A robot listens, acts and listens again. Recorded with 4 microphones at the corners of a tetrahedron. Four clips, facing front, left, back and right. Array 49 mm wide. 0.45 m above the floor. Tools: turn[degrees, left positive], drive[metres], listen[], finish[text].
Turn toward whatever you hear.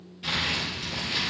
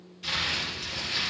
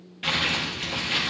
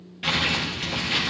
Thought: The crumpling: 130° right.
Action: turn[-130]
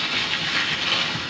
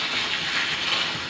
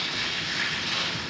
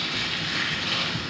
Thought: The crumpling is now 20° left.
Action: turn[20]
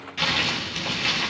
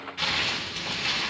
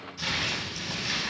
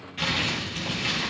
Action: finish[Facing the crumpling, over 4 m away.]